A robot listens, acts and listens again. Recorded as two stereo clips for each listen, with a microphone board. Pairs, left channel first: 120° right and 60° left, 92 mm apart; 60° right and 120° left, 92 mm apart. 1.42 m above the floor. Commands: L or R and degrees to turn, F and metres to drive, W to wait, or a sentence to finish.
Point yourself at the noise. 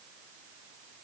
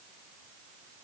W
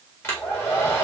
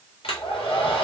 R55
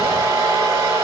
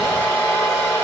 Facing the hair dryer, 1 to 2 m away.